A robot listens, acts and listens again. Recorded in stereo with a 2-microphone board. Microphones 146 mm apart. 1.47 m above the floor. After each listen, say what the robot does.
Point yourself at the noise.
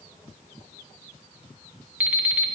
Turn 30° right.
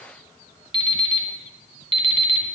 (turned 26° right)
Turn 140° right.
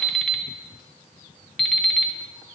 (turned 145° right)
Facing the alarm clock.